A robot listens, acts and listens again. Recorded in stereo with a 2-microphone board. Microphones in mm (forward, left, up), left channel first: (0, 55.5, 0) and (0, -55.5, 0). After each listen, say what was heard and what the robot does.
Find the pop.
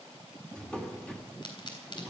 The pop: about 45° left or 135° left. Turn 45° left.
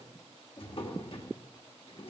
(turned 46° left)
Keep listening.
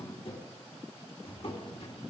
I heard a pop, but can't make it out now. It was about straight ahead or 90° left.